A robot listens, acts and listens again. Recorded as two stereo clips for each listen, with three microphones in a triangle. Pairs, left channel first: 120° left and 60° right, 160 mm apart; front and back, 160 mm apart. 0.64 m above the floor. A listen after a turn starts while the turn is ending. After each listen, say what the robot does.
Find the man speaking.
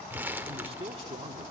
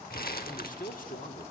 Turn 15° right.
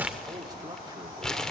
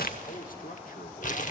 Facing the man speaking, 1 to 2 m away.